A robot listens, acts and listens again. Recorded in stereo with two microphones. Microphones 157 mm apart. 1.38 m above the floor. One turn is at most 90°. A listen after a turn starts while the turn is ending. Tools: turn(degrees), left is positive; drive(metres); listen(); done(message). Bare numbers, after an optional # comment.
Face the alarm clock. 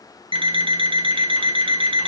# The alarm clock: about 35° right or 145° right.
turn(-35)
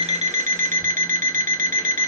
# So it is at 110° right.
turn(-90)
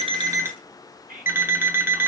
# The alarm clock is now 15° right.
turn(-15)
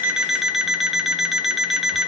done("Facing the alarm clock.")